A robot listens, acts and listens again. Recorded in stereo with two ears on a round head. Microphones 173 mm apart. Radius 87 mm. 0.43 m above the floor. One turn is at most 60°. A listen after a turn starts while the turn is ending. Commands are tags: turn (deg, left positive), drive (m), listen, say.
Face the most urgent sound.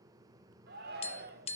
<turn deg="-55"/>
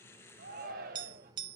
<turn deg="-55"/>
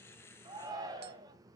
<turn deg="-20"/>
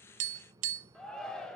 <say>Found it: a shout, straight ahead.</say>